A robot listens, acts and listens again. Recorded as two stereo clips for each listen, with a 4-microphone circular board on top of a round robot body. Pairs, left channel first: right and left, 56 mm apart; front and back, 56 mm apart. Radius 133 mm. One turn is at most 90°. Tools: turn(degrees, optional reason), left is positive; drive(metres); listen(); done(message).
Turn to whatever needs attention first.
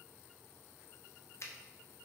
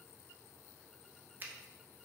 listen()
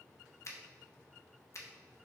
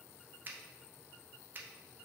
listen()
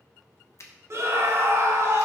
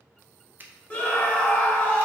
turn(degrees=55, reason="The scream: 55° left.")
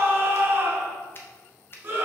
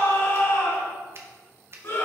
turn(degrees=40, reason="The scream is now 40° left.")
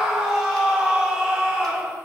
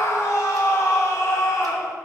turn(degrees=10, reason="The scream is now 10° left.")
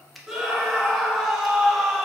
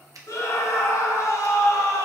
done("Found it: a scream, straight ahead.")